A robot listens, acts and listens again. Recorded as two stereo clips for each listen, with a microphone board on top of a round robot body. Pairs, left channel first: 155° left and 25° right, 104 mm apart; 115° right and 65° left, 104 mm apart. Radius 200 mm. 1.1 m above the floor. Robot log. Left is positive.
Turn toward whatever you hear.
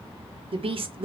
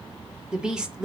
note: The woman speaking: 15° right.
cmd yaw -15
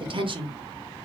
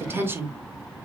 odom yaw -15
end: Facing the woman speaking.